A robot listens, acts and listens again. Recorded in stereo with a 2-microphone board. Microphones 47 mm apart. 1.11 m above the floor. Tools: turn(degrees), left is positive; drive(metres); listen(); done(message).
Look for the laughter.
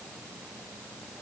listen()
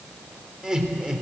turn(degrees=-15)
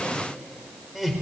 turn(degrees=-30)
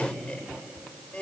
turn(degrees=25)
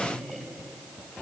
done("Found it: laughter, straight ahead, over 4 m away.")